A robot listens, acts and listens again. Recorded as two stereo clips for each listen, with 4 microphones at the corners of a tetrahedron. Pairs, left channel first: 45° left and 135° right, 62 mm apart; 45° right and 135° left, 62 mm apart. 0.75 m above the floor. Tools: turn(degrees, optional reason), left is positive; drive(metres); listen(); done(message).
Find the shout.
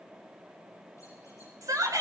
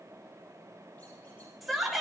turn(degrees=-135, reason="The shout: 135° right.")
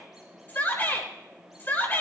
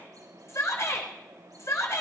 turn(degrees=-10, reason="The shout is now 10° right.")
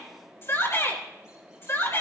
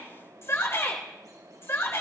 done("Facing the shout.")